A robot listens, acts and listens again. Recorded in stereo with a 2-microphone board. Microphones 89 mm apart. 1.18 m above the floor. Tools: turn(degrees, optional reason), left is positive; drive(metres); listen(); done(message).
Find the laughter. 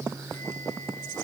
listen()
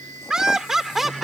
turn(degrees=30)
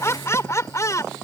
turn(degrees=145, reason="So it is at 145° left.")
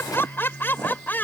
turn(degrees=20, reason="The laughter is now 20° left.")
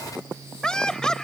turn(degrees=10, reason="The laughter is now 10° left.")
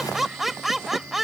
done("Found it: laughter, straight ahead.")